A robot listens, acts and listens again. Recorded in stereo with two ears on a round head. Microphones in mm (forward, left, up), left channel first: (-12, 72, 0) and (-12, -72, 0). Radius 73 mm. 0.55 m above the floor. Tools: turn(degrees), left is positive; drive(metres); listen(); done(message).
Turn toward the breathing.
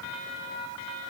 listen()
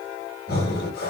turn(degrees=60)
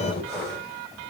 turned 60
done("Found it: breathing, straight ahead, 2 to 4 m away.")